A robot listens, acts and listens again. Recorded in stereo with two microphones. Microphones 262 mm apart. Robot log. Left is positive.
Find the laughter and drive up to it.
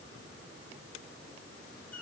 cmd idle
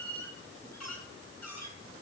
cmd idle
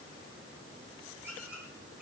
end: I can't make out laughter to turn to.